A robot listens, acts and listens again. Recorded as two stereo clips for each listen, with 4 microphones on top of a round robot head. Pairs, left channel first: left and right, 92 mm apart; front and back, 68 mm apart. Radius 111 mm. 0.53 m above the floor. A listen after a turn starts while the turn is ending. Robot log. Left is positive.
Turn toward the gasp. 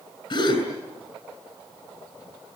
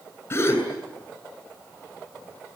note: The gasp: 60° left.
cmd yaw +60
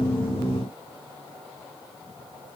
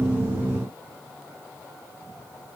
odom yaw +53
end: Facing where the gasp came from. I can't hear it now.